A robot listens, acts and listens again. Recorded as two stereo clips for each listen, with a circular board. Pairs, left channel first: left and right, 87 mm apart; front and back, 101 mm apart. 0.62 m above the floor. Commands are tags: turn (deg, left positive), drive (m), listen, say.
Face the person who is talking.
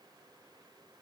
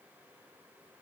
<listen/>
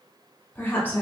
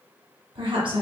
<turn deg="155"/>
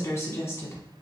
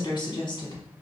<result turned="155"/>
<turn deg="35"/>
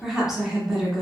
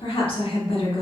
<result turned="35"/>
<say>Found it: a woman speaking, straight ahead.</say>